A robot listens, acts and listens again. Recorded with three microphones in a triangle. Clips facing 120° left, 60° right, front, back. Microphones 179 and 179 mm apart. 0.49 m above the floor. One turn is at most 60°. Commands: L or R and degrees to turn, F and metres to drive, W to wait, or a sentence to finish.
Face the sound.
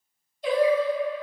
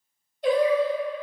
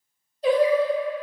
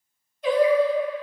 R55
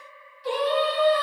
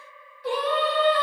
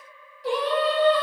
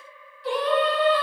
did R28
R45
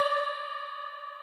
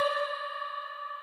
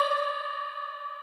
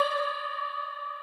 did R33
R25
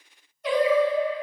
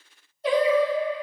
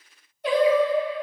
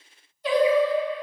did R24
R10
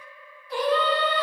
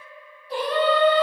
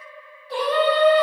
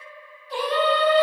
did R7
R10
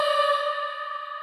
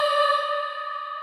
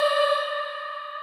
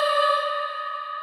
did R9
Found it: singing, straight ahead.